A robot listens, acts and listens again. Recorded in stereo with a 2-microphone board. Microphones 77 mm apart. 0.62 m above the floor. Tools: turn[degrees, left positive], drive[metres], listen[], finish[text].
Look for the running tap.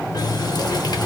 Thought: The running tap: about 60° left or 120° left.
Action: turn[60]
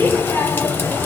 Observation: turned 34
Thought: So it is at 25° left.
Action: turn[25]
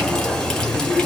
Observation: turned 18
Thought: The running tap is now 10° left.
Action: turn[10]
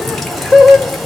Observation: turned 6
Action: finish[Found it: a running tap, straight ahead, 1 to 2 m away.]